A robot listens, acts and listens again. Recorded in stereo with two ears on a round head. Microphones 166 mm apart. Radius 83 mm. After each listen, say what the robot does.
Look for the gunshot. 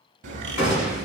Turn 35° left.
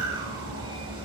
Keep listening.
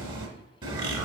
I heard a gunshot, but can't make it out now. It was about straight ahead or 110° left.